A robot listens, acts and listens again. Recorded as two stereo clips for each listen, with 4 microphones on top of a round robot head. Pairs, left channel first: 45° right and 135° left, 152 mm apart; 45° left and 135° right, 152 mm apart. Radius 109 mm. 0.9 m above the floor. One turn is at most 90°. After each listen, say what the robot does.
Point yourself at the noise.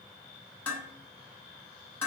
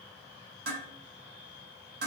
Turn 90° right.
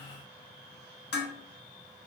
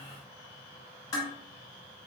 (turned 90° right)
Turn 25° right.
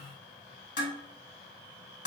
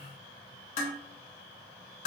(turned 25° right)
Found it: dishes clattering, straight ahead, under 1 m away.